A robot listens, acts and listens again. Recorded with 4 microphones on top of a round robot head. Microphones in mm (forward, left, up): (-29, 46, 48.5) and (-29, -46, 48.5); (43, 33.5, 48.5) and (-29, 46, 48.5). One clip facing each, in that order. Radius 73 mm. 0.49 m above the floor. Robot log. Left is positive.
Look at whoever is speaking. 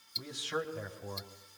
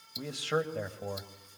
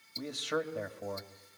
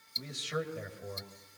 note: The man speaking: 55° right.
cmd yaw -55
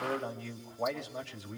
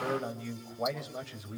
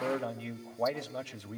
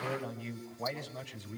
end: Found it: a man speaking, straight ahead.